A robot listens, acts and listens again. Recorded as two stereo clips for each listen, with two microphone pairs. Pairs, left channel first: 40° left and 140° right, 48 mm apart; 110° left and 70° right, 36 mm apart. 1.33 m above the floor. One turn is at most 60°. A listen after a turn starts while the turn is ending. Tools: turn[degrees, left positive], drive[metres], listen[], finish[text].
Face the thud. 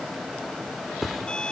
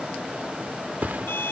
Thought: The thud: 50° right.
Action: turn[-50]
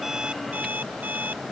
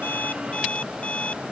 Action: finish[Facing where the thud came from. I can't hear it now.]